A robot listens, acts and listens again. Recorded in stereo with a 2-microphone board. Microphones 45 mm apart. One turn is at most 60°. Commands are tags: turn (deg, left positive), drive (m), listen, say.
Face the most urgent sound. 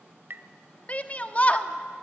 <turn deg="30"/>
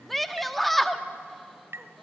<say>Found it: a shout, straight ahead, 1 to 2 m away.</say>